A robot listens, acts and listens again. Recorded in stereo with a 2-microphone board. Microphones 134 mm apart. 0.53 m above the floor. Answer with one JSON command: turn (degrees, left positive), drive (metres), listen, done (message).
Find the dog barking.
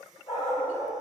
{"turn": 45}
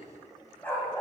{"turn": 15}
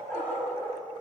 {"turn": 15}
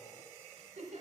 {"listen": true}
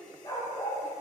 {"turn": 35}
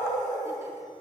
{"turn": 15}
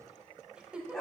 {"done": "Facing the dog barking, 1 to 2 m away."}